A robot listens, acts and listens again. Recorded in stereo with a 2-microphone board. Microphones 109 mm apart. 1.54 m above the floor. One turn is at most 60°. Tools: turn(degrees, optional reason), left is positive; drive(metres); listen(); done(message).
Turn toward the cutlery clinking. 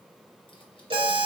listen()
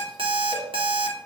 listen()
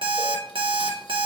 done("I can't make out cutlery clinking, only an alarm clock.")